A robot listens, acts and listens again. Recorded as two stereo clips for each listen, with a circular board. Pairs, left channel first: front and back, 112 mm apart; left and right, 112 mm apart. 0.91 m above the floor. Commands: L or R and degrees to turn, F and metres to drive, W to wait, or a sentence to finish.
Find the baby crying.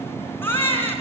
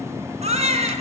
R70
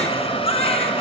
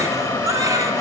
R30
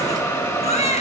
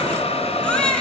L10
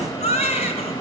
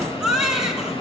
Facing the baby crying.